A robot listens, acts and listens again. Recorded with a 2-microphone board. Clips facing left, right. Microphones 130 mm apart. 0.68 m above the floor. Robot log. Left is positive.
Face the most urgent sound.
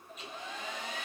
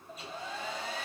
cmd idle
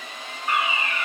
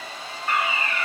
cmd yaw +30
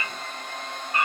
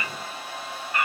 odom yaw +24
note: So it is at 145° left.
cmd yaw +145
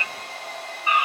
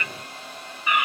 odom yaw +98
note: The fire alarm is now 45° left.
cmd yaw +45
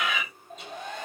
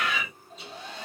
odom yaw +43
end: Found it: a fire alarm, straight ahead, 2 to 4 m away.